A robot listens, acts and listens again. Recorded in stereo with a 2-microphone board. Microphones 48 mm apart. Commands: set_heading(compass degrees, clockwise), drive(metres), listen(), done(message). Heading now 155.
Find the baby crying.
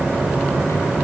listen()
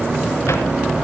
listen()
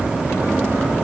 done("I can't make out a baby crying to turn to.")